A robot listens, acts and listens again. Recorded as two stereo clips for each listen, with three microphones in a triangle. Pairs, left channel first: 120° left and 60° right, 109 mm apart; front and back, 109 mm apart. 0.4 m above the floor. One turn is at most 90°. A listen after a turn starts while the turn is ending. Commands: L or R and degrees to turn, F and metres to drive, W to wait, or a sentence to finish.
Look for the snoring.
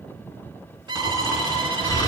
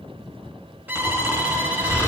L60
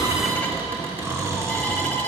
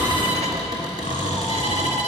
Found it: snoring, straight ahead.